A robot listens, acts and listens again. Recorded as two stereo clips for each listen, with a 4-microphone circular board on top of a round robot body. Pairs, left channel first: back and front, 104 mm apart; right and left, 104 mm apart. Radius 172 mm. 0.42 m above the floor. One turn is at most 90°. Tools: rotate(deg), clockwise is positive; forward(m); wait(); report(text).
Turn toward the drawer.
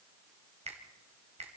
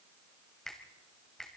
wait()
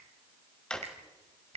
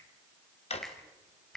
rotate(90)
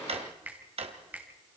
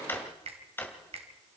rotate(20)
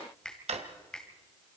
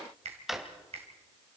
report("Facing the drawer, 1 to 2 m away.")